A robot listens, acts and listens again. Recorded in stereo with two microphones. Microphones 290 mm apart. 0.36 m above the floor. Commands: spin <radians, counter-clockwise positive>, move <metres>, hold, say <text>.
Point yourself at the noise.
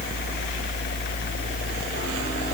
hold
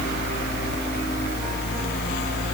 hold
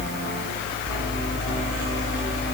say I can't make out anything.